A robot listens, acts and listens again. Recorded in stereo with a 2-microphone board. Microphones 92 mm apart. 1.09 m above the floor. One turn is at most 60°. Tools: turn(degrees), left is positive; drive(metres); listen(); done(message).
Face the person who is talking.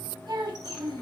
turn(degrees=-55)
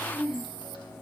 done("Facing the child speaking.")